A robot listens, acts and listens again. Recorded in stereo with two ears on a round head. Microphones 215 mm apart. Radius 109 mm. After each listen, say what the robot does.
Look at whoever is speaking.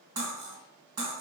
Keep listening.
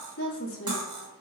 Turn 55° left.
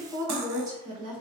Turn 20° right.
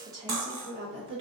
Turn 25° right.
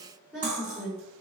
Found it: a woman speaking, straight ahead.